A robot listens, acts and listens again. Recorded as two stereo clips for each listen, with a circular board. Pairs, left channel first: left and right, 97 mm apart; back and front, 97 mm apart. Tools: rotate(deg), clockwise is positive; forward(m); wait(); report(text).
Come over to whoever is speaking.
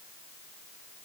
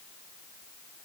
wait()
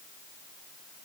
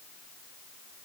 wait()
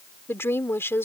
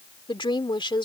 rotate(-155)
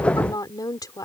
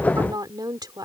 rotate(-45)
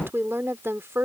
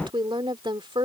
rotate(25)
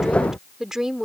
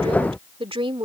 forward(1.0)
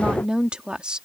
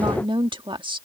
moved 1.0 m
rotate(10)
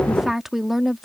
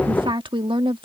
forward(1.0)
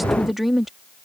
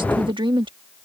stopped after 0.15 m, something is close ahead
report("I am next to the woman speaking.")